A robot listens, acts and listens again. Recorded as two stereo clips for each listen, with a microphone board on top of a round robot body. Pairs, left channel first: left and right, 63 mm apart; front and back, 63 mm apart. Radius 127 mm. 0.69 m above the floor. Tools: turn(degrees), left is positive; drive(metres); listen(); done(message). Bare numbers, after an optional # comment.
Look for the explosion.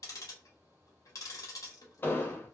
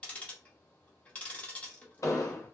# The explosion: 35° left.
turn(35)
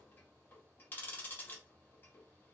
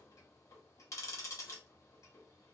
done("I heard an explosion from this way, but can't make it out now.")